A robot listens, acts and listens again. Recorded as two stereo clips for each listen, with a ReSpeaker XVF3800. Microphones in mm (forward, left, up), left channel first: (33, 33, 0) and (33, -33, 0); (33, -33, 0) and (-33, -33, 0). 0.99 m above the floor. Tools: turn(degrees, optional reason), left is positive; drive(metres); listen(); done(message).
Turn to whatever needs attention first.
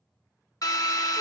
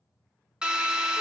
listen()
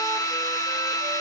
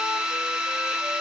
listen()
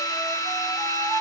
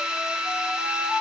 done("I can't make out anything urgent, only a drill and a flute.")